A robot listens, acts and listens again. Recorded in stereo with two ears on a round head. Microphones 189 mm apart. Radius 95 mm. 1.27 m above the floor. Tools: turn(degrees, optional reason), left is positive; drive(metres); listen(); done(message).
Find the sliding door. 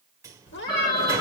turn(degrees=-30)
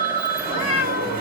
turn(degrees=-135, reason="So it is at 135° right.")
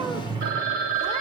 turn(degrees=-20, reason="The sliding door is now 20° right.")
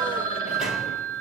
listen()
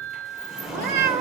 done("Found it: a sliding door, straight ahead, 1 to 2 m away.")